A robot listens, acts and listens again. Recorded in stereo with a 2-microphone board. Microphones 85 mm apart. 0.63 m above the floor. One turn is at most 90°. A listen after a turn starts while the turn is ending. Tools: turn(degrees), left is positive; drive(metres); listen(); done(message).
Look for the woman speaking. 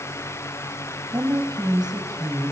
turn(degrees=-55)
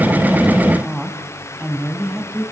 turn(degrees=-15)
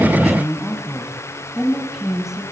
done("Facing the woman speaking, over 4 m away.")